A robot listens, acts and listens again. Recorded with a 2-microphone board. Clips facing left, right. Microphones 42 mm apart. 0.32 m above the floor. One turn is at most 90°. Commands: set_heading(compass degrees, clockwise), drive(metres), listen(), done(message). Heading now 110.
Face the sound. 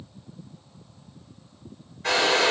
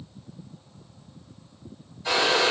set_heading(40)
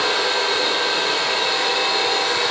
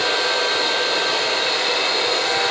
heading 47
done("Facing the hair dryer.")